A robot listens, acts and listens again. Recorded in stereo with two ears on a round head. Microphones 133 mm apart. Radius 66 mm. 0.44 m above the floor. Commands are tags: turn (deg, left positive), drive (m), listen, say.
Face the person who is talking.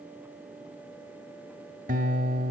<listen/>
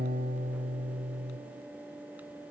<listen/>
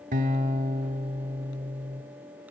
<say>I can't make out anyone speaking to turn to.</say>